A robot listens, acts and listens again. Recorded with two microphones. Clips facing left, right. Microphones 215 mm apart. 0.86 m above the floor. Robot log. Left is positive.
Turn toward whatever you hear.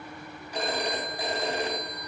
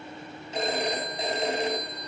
note: The phone ringing: about 20° right or 160° right.
cmd yaw -20
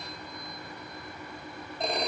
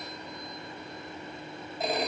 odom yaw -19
end: Facing the phone ringing.